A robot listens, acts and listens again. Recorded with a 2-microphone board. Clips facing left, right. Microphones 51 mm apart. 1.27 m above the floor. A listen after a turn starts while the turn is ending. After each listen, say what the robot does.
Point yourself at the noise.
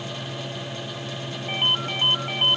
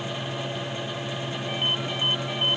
Turn 50° left.
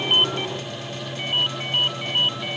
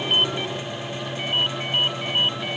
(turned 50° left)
Facing the ringtone.